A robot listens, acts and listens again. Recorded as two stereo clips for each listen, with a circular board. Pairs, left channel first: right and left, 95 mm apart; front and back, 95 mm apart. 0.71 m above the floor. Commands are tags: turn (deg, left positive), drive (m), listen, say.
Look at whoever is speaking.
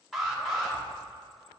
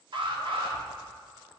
<listen/>
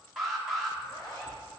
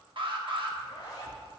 <listen/>
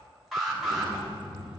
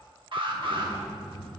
<turn deg="-85"/>
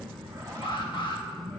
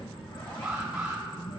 <say>Found it: a child speaking, straight ahead, 2 to 4 m away.</say>